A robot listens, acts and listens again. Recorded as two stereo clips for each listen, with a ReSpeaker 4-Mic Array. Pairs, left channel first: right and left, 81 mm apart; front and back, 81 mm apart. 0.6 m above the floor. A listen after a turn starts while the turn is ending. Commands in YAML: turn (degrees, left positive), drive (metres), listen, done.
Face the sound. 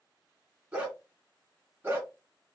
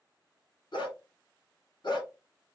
turn: 25
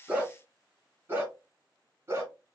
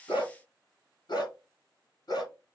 turn: 35
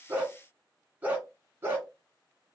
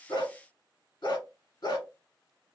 turn: 25
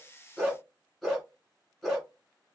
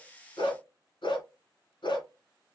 done: "Facing the dog barking, 2 to 4 m away."